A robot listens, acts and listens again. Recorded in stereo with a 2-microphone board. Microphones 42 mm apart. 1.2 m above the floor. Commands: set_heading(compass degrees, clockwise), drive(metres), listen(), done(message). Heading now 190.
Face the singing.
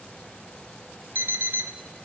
listen()
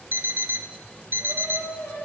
set_heading(100)
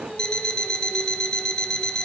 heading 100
listen()
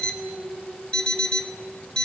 done("Facing the singing.")